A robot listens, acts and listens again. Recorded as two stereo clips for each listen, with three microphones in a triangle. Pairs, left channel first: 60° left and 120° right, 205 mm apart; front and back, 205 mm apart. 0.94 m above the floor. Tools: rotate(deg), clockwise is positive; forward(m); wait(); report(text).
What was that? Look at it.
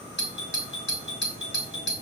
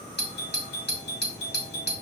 rotate(-35)
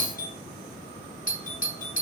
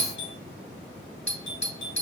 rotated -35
rotate(-15)
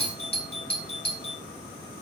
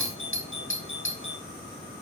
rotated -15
report("Found it: a doorbell, straight ahead.")